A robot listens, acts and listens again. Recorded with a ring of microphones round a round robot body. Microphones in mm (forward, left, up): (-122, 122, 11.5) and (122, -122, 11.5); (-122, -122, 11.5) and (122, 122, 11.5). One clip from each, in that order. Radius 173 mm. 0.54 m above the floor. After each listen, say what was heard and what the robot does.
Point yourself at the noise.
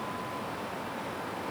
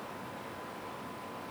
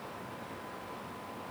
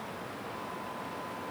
Keep listening.
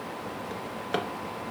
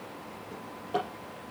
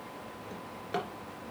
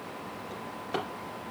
The drawer: 140° left. Turn 140° left.
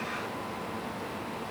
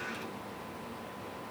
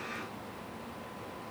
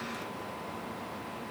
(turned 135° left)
Keep listening.
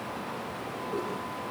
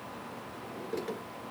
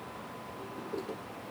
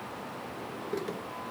Facing the drawer, 2 to 4 m away.